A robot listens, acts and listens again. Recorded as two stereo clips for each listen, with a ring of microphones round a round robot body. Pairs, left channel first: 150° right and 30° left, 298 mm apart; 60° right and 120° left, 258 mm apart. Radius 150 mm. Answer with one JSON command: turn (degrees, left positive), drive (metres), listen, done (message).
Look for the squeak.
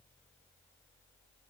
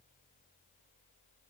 {"listen": true}
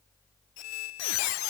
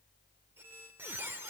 {"turn": -155}
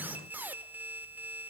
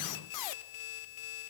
{"turn": -55}
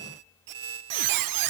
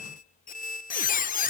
{"done": "Found it: a squeak, straight ahead."}